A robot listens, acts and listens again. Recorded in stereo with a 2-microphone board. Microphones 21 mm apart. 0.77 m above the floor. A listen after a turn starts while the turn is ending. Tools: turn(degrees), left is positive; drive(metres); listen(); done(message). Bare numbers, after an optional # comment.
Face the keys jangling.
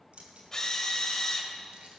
turn(-90)
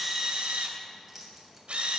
# So it is at 10° right.
turn(-10)
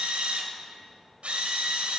listen()
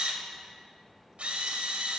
listen()
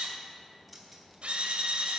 done("Found it: keys jangling, straight ahead, 2 to 4 m away.")